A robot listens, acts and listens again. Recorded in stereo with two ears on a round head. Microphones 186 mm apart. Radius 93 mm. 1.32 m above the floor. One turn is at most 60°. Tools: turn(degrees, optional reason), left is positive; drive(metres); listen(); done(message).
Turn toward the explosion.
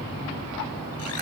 listen()
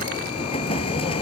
turn(degrees=30, reason="The explosion: about 30° left or 150° left.")
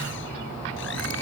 listen()
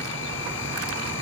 done("I heard an explosion, but can't make it out now. It was about straight ahead or 120° left.")